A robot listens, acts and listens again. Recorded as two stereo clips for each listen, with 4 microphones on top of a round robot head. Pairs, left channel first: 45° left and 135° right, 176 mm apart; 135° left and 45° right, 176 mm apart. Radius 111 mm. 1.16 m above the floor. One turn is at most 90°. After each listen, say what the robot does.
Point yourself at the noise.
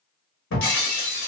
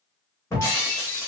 Turn 60° left.
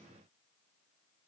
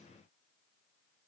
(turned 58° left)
I heard breaking glass from this way, but can't make it out now.